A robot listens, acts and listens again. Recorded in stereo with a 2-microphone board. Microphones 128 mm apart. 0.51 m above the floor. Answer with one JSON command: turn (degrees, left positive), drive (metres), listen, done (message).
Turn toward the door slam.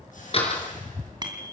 {"turn": 50}
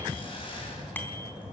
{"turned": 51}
{"listen": true}
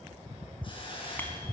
{"done": "I heard a door slam, but can't make it out now. It was about straight ahead or 80° left."}